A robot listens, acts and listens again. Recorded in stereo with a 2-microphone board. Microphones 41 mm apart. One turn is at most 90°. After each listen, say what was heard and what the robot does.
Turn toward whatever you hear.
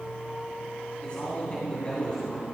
The man speaking: about 25° left or 155° left. Turn 25° left.
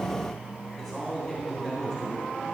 Facing the man speaking.